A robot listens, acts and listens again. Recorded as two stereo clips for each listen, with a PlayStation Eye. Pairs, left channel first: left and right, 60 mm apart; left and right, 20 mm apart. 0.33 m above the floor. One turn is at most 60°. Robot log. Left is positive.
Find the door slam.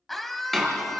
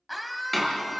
cmd yaw +30
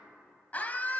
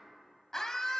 cmd idle
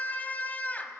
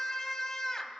end: I heard a door slam, but can't make it out now. It was about 25° right or 145° left.